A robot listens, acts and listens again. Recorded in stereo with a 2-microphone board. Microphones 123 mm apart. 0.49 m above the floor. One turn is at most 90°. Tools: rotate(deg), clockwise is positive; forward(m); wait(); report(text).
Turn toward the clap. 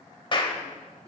rotate(-40)
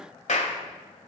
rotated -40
rotate(-90)
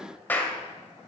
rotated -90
rotate(-15)
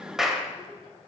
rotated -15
report("Found it: a clap, straight ahead, 1 to 2 m away.")